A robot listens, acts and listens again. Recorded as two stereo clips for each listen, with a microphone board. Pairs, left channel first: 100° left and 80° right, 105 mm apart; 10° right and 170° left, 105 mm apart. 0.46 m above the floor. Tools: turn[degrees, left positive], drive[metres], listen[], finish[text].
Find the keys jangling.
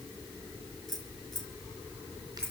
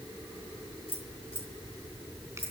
Thought: The keys jangling: 15° left.
Action: turn[15]
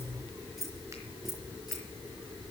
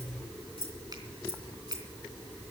Thought: The keys jangling is now 10° left.
Action: turn[10]
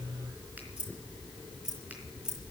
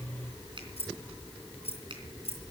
Action: finish[Found it: keys jangling, straight ahead.]